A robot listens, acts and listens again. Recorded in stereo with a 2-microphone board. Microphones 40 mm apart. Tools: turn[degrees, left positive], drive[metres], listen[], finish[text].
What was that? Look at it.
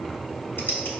Action: listen[]
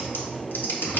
Thought: The typing on a keyboard: about 65° left or 115° left.
Action: turn[65]
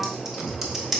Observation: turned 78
Action: finish[Facing the typing on a keyboard.]